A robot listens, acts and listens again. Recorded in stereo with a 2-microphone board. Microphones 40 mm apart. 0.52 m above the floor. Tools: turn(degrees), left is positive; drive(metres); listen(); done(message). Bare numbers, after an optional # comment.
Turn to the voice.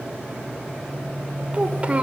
# The child speaking: about 30° right or 150° right.
turn(-30)
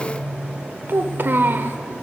# So it is at 115° right.
turn(-115)
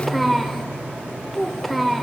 done("Facing the child speaking, 1 to 2 m away.")